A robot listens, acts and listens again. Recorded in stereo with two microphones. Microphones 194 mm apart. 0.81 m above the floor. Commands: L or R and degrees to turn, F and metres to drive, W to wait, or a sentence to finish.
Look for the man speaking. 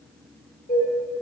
W
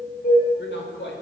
L90
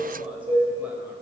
W
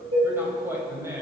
R15
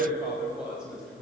Facing the man speaking, over 4 m away.